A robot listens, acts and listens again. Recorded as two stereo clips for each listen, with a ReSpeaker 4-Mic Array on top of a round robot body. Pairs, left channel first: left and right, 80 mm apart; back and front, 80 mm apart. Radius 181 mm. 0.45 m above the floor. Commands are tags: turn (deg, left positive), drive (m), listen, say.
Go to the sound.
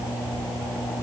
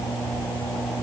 <listen/>
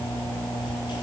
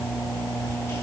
<listen/>
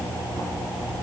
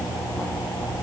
<say>I can't make out anything.</say>